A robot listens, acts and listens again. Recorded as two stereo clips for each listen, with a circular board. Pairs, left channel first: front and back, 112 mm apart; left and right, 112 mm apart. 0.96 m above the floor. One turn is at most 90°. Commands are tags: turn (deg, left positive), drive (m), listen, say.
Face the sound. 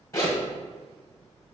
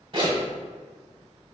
<turn deg="-60"/>
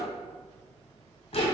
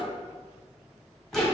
<say>Facing the zipper, 1 to 2 m away.</say>